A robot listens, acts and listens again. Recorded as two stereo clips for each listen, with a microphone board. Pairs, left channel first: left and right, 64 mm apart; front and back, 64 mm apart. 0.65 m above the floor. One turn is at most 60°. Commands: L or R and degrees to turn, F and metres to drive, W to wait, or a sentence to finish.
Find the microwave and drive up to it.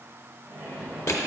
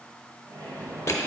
R60
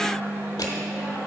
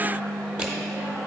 R60
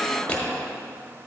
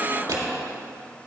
R50
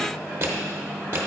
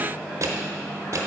F1.0
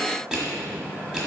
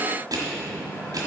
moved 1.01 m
F1.0
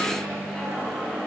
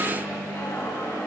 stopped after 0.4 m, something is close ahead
Arrived at the microwave, straight ahead.